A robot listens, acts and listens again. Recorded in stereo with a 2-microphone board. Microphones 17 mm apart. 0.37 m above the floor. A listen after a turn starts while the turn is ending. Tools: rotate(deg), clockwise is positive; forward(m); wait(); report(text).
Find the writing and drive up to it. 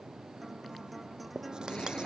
rotate(55)
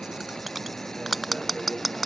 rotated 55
forward(1.0)
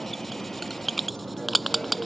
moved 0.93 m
forward(1.0)
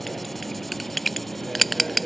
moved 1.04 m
forward(1.0)
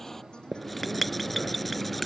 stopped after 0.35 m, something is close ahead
report("Arrived at the writing, straight ahead.")